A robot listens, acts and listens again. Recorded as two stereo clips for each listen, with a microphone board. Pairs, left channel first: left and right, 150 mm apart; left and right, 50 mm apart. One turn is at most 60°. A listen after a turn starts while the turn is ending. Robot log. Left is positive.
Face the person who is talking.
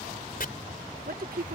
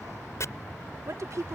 cmd yaw -60
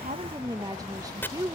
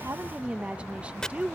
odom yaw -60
note: So it is at 25° right.
cmd yaw -25
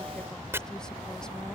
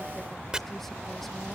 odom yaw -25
cmd idle
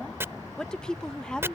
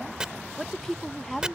end: Facing the woman speaking.